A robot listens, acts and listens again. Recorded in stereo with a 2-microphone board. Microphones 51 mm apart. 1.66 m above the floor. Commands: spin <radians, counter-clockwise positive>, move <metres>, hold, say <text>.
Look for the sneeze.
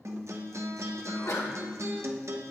spin 1.13
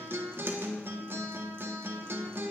hold
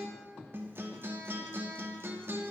say I heard a sneeze, but can't make it out now. It was about straight ahead or 50° left.